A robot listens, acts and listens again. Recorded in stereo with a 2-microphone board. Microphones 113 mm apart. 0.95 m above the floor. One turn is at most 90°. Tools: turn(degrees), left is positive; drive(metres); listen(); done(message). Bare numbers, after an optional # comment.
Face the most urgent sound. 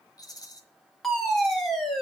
turn(30)
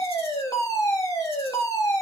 # So it is at 145° left.
turn(90)
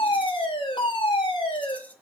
# The fire alarm is now 50° left.
turn(50)
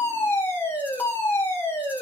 # The fire alarm is now 20° left.
turn(20)
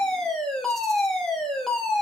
done("Found it: a fire alarm, straight ahead, 2 to 4 m away.")